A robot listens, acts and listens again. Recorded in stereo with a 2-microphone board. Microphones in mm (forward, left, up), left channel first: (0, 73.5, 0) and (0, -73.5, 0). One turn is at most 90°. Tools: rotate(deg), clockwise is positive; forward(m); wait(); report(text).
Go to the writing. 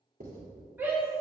rotate(70)
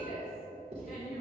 rotate(35)
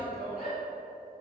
wait()
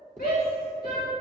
forward(1.0)
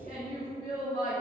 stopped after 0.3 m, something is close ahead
rotate(-15)
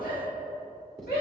report("Something is in my way. I am facing the writing but have not reached it.")